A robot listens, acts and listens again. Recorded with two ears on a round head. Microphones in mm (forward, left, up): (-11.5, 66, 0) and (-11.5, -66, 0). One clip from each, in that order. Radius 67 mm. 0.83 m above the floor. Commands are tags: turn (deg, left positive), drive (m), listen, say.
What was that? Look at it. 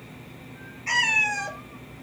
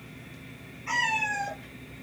<turn deg="65"/>
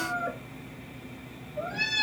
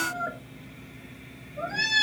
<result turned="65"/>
<turn deg="-50"/>
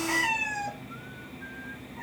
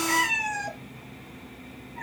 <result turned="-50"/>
<turn deg="-35"/>
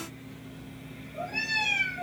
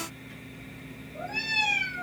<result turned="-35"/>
<say>Facing the cat meowing, 1 to 2 m away.</say>